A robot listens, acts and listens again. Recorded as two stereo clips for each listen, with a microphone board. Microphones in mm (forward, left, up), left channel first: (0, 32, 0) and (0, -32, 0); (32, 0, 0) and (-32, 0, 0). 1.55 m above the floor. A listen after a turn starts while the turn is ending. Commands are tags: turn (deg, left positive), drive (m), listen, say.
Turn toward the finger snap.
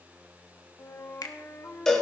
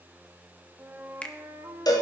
<turn deg="70"/>
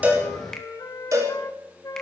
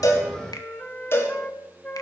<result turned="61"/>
<turn deg="10"/>
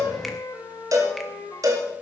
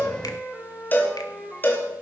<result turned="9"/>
<listen/>
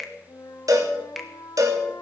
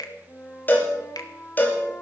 <say>Facing the finger snap.</say>